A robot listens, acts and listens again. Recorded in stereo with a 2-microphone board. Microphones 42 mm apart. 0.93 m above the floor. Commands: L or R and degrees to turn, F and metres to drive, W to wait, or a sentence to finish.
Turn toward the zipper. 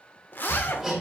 L55
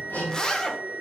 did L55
L20
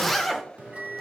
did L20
L10
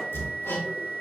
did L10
W
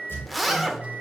Facing the zipper, under 1 m away.